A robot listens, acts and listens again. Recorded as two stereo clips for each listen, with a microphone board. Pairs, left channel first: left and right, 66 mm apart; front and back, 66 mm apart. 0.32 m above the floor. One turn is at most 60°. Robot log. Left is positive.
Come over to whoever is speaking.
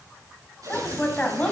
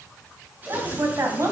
note: The woman speaking: 150° left.
cmd yaw +60
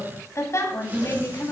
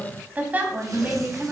note: The woman speaking is now 120° left.
cmd yaw +60
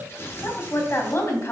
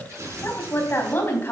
note: The woman speaking is now 50° left.
cmd yaw +50
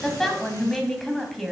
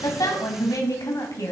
cmd fwd 1.0
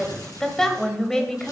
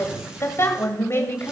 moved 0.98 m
note: The woman speaking is now 10° left.
cmd yaw +10
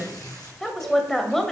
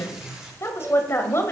cmd fwd 1.0
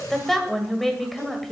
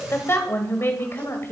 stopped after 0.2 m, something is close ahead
end: I am next to the woman speaking.